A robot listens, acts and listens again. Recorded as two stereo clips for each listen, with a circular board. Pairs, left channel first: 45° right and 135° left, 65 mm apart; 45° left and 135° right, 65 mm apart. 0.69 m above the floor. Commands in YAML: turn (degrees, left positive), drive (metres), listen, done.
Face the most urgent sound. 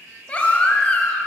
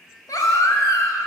turn: 25
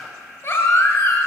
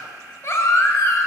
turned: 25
done: "Facing the baby crying."